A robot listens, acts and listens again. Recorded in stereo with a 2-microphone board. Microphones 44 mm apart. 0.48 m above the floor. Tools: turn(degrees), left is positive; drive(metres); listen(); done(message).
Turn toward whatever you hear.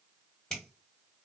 turn(degrees=30)
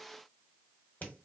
turn(degrees=135)
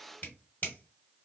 turn(degrees=50)
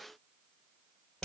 turn(degrees=15)
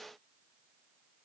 listen()
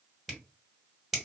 done("Facing the finger snap, 1 to 2 m away.")